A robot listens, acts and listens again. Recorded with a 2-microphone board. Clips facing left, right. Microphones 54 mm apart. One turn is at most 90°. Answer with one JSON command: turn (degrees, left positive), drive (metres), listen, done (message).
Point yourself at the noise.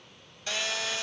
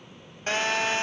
{"turn": -40}
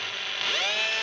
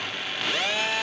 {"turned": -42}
{"done": "Facing the phone buzzing."}